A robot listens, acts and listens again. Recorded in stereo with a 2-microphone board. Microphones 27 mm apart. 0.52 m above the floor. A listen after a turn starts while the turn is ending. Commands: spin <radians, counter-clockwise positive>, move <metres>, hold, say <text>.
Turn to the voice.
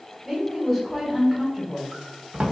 spin 0.52
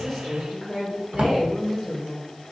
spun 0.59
spin 2.53
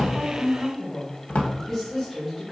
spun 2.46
say Facing the woman speaking.